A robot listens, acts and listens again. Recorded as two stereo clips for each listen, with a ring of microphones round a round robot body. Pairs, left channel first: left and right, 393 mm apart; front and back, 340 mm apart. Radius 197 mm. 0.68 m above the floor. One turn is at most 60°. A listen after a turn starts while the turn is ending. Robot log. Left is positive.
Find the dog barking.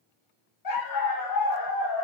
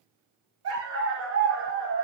note: The dog barking: 130° left.
cmd yaw +60
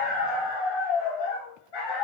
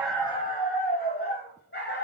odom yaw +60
note: The dog barking is now 60° left.
cmd yaw +60
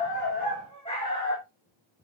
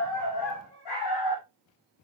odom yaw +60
note: The dog barking is now 10° left.
cmd yaw +10
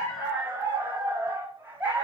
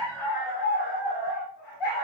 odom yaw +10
end: Facing the dog barking.